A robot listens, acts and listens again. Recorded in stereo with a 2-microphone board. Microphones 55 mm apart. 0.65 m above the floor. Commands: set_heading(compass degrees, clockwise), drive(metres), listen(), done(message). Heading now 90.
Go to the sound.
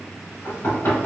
set_heading(40)
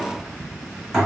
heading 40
drive(1.0)
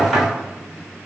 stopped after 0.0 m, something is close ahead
done("Something is in my way. I am facing the knocking but have not reached it.")